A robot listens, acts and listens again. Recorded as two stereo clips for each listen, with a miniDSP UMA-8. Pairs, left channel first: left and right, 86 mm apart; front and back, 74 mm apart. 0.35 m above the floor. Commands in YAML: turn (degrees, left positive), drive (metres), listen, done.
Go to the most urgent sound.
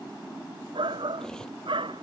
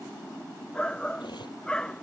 turn: -80
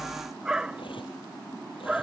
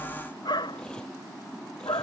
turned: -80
turn: -10
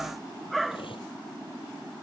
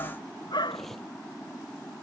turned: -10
drive: 1.0
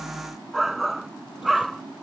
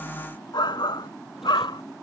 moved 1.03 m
drive: 1.0
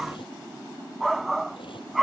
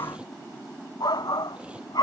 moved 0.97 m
drive: 1.0
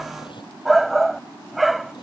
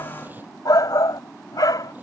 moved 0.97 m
drive: 1.0
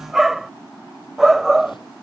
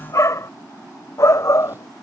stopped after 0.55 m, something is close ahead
done: "I am next to the shout."